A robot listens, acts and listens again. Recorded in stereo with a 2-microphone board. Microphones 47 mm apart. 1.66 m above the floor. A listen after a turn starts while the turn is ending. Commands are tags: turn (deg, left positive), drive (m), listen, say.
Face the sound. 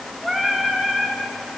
<turn deg="-15"/>
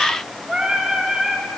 <turn deg="-155"/>
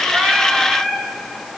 <turn deg="15"/>
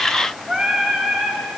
<say>Facing the singing, 2 to 4 m away.</say>